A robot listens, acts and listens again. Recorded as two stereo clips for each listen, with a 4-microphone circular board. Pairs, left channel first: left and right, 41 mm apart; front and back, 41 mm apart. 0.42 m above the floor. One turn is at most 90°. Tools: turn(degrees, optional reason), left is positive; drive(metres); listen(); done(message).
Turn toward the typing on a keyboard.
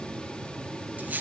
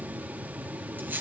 listen()
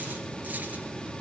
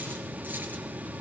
listen()
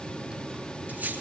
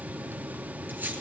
done("I can't make out typing on a keyboard to turn to.")